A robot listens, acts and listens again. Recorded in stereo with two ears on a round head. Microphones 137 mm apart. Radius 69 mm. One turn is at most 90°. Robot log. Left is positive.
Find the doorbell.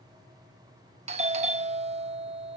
note: The doorbell: about 40° right or 140° right.
cmd yaw -40
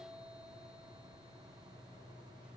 cmd idle
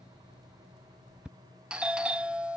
end: Found it: a doorbell, straight ahead.